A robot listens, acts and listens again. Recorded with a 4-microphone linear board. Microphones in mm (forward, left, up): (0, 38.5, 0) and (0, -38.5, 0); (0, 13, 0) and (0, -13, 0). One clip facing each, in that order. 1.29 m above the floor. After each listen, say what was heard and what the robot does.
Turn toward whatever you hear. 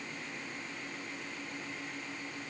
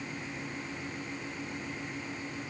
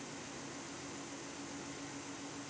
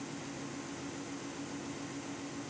Keep listening.
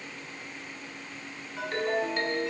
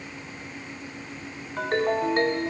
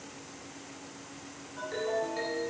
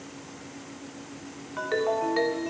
The ringtone: about 50° right or 130° right. Turn 50° right.
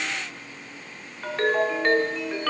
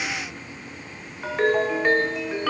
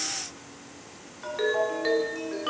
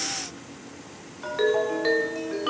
So it is at 10° right. Turn 10° right.
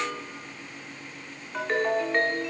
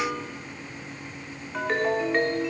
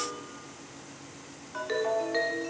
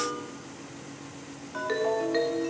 Found it: a ringtone, straight ahead, 1 to 2 m away.